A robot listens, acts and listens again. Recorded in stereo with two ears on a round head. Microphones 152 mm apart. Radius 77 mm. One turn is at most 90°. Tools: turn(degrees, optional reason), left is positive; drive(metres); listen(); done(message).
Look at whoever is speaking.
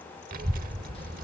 turn(degrees=-55, reason="The child speaking: about 55° right or 125° right.")
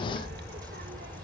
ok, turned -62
turn(degrees=-60, reason="So it is at 60° right.")
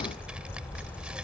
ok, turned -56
done("Found it: a child speaking, straight ahead.")